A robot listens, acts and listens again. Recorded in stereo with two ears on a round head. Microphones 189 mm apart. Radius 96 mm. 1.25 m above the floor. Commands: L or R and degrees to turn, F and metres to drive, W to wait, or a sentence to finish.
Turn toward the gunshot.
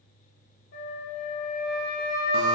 W
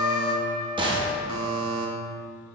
R25
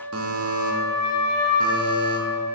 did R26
W
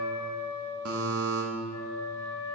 I heard a gunshot, but can't make it out now. It was about 5° left or 130° right.